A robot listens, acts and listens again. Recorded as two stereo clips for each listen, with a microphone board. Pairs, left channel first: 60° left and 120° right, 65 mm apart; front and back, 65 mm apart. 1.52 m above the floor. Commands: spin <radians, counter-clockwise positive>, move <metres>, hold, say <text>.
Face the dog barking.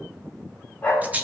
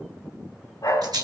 say Facing the dog barking.